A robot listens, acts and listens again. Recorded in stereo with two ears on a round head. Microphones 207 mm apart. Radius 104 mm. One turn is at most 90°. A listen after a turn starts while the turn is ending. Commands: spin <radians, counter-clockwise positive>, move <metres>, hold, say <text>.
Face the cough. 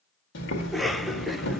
spin 0.52
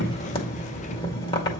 hold
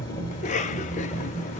spin 1.57
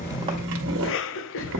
spin 0.96
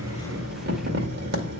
hold
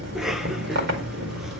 say Found it: a cough, straight ahead, under 1 m away.